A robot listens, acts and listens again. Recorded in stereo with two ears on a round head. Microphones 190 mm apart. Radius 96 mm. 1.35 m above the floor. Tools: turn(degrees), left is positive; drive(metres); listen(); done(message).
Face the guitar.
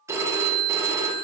listen()
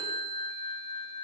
listen()
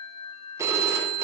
done("I can't make out a guitar to turn to.")